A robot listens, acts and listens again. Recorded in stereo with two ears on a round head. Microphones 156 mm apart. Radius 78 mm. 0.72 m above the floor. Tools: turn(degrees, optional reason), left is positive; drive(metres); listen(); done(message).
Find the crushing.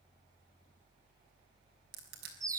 turn(degrees=-65, reason="The crushing: about 65° right or 115° right.")
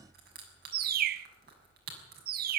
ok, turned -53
turn(degrees=-60, reason="So it is at 60° right.")
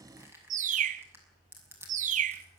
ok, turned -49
turn(degrees=-15, reason="The crushing is now 15° right.")
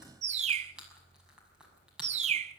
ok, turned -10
done("Found it: crushing, straight ahead.")